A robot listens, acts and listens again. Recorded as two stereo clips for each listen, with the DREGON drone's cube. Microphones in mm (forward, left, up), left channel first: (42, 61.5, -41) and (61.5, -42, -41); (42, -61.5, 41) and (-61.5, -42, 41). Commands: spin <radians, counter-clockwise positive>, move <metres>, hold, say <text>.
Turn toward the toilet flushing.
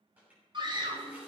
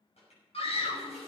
say Found it: a toilet flushing, straight ahead.